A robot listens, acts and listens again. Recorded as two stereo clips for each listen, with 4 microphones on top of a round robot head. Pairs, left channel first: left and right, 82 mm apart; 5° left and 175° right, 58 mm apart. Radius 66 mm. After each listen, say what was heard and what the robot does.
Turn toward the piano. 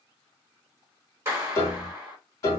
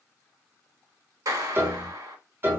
The piano: 140° left. Turn 140° left.
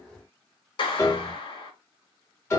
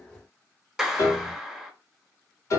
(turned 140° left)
The piano is now 35° left. Turn 35° left.
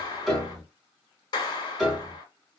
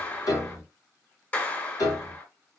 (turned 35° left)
Found it: a piano, straight ahead, 2 to 4 m away.